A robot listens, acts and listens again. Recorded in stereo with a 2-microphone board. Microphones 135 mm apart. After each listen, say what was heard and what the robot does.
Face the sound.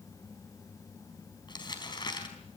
The crumpling: about 35° left or 145° left. Turn 35° left.
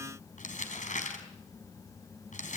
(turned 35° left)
So it is at 110° left. Turn 110° left.
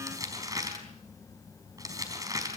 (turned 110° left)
The crumpling is now 25° right. Turn 25° right.
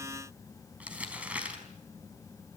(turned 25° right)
The crumpling is now 10° right. Turn 10° right.
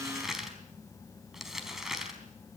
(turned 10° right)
Found it: crumpling, straight ahead, over 4 m away.